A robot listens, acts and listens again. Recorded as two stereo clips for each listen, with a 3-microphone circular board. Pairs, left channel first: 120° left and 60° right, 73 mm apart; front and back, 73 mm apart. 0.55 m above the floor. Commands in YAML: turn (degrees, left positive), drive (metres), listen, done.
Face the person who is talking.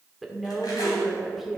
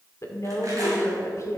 turn: 30
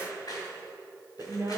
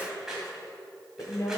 turn: -20
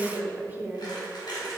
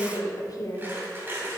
done: "Found it: a woman speaking, straight ahead."